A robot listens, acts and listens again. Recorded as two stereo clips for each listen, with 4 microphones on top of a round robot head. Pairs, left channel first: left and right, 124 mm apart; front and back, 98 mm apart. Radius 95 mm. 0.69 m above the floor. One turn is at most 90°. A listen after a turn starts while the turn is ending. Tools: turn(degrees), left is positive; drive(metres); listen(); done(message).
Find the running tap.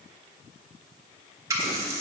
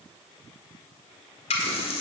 turn(degrees=-20)
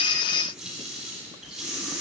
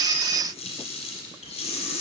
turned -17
done("Found it: a running tap, straight ahead.")